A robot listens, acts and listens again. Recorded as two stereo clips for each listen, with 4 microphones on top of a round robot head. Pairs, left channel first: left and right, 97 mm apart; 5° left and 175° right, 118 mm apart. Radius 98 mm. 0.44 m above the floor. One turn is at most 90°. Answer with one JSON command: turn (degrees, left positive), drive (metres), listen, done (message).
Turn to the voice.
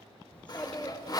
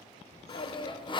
{"turn": 15}
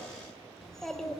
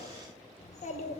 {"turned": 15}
{"done": "Facing the child speaking, 1 to 2 m away."}